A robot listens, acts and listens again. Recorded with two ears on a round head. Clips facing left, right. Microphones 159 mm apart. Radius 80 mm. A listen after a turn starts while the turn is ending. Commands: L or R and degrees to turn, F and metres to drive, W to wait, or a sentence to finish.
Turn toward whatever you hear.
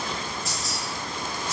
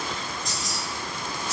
R30
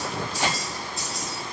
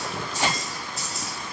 R30
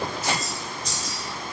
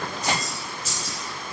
R30
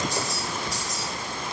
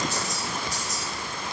R30
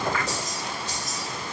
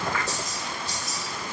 L10
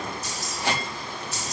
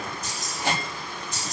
L10
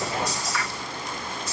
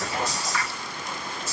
Facing the keys jangling.